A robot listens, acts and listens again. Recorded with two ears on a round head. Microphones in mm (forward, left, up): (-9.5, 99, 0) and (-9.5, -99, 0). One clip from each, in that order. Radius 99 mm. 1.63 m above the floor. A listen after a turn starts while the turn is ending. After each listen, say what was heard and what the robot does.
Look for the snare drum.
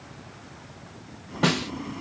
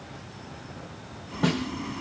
The snare drum: about 35° left or 145° left. Turn 35° left.
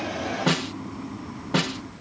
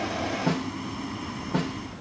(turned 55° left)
So it is at 90° left. Turn 90° left.
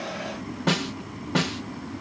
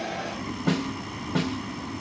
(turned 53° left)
The snare drum is now 35° left. Turn 35° left.
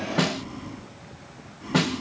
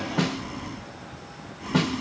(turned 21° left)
The snare drum is now 15° left. Turn 15° left.
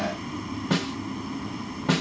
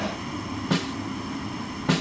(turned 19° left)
Found it: a snare drum, straight ahead.